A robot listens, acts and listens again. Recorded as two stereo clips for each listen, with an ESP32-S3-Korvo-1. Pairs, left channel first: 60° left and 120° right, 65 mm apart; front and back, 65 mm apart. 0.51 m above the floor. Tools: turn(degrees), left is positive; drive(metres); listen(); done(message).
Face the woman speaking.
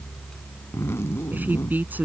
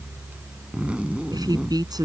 turn(degrees=175)
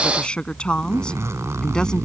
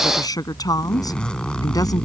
turn(degrees=-15)
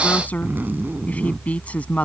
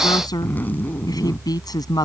turn(degrees=-10)
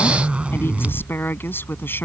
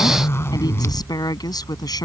done("Found it: a woman speaking, straight ahead.")